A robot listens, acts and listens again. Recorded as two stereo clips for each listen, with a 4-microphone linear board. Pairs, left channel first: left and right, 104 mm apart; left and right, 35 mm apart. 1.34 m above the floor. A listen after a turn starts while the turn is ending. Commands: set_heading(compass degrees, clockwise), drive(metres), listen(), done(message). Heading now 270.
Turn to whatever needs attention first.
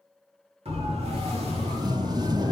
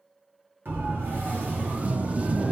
set_heading(0)
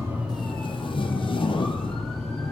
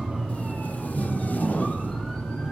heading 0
done("Found it: a siren, straight ahead, 2 to 4 m away.")